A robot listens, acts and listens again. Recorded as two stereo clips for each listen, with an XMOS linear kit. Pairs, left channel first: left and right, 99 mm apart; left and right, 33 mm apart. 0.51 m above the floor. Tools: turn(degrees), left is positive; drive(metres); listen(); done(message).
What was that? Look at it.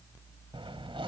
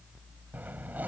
turn(degrees=-60)
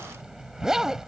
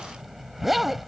done("Facing the zipper.")